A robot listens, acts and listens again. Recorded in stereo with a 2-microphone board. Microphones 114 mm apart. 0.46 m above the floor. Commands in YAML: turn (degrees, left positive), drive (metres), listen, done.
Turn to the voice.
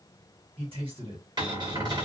turn: -50
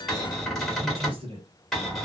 turn: -60
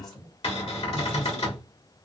done: "Facing the man speaking."